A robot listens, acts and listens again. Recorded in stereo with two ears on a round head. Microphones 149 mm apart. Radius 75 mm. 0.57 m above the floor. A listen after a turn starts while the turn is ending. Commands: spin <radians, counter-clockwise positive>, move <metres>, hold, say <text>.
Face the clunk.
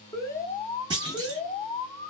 spin -0.52
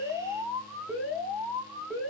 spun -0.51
hold
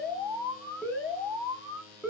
say I heard a clunk, but can't make it out now. It was about straight ahead or 120° right.